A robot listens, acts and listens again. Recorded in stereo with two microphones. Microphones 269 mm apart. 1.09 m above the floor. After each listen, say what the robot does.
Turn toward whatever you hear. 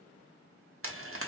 Turn 55° right.
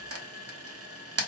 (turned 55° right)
Turn 65° right.
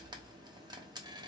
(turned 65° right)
Turn 15° right.
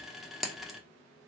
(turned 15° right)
Found it: frying, straight ahead.